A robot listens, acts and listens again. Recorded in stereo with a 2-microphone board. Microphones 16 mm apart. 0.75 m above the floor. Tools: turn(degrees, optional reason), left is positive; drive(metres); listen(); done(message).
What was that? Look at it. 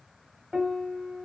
turn(degrees=-70, reason="The piano: about 70° right or 110° right.")
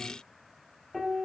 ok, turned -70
done("Facing the piano, 2 to 4 m away.")